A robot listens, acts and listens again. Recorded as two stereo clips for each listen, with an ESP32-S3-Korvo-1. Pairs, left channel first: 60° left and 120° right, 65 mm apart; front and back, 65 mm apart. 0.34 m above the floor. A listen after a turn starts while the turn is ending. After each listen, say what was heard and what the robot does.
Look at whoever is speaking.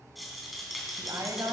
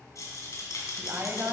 The woman speaking: 135° right. Turn 135° right.
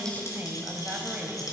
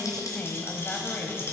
The woman speaking is now 60° right. Turn 60° right.
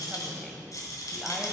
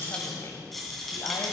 Keep listening.
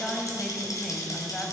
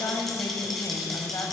The woman speaking is now 20° right. Turn 20° right.
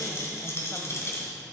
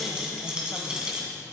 Keep listening.
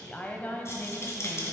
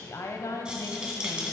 Found it: a woman speaking, straight ahead.